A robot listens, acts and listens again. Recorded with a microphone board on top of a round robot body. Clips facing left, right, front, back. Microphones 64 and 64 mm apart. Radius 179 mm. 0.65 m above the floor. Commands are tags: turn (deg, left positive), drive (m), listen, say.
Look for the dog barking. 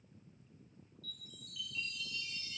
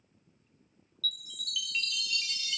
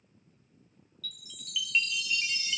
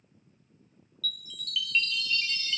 <listen/>
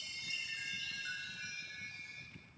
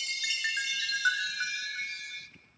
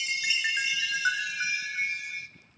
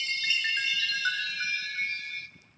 <listen/>
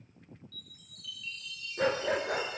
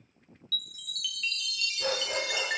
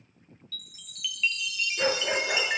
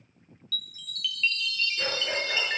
<turn deg="65"/>
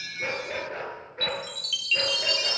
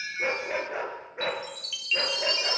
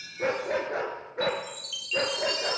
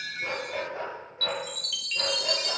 <turn deg="-15"/>
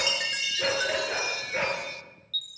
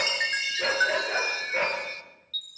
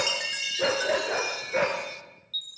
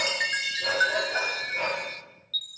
<say>Facing the dog barking.</say>